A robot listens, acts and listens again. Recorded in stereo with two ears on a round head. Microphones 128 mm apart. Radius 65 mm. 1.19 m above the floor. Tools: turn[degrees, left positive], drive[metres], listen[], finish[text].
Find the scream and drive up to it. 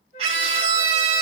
Thought: The scream: about 45° right or 135° right.
Action: turn[-45]
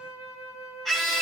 Action: drive[1.0]
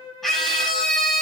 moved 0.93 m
Action: drive[1.0]
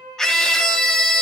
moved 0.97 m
Action: drive[1.0]
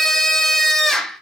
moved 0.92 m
Action: drive[1.0]
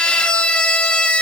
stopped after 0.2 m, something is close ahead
Action: finish[I am next to the scream.]